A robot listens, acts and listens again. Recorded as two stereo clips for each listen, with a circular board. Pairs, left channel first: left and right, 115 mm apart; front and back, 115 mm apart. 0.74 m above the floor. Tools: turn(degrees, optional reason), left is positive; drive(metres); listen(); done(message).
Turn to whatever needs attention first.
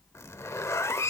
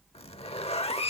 listen()
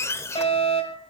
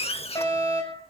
turn(degrees=60, reason="The fire alarm: 60° left.")
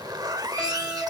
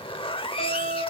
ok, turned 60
done("Facing the fire alarm, over 4 m away.")